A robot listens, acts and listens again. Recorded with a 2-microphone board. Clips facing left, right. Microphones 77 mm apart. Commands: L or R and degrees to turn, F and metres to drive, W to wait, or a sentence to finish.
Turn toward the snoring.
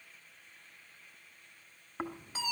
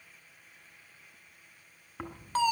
L15
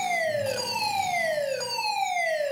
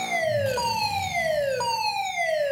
W
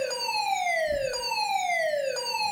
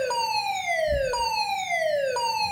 Facing the snoring.